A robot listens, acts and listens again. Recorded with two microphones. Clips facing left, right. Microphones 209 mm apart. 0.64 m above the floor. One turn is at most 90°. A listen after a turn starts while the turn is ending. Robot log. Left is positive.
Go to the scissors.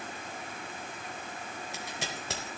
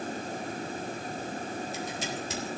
note: The scissors: about 70° left or 110° left.
cmd yaw +70
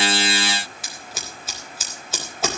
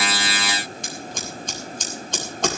cmd fwd 1.0
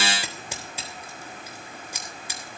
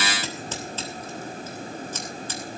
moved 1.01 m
note: The scissors is now 10° left.
cmd yaw +10
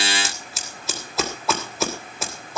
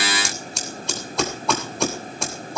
cmd fwd 1.0
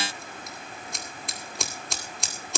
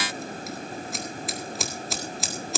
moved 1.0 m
cmd fwd 1.0
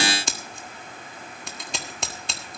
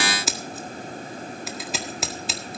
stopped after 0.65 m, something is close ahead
end: Arrived at the scissors, straight ahead.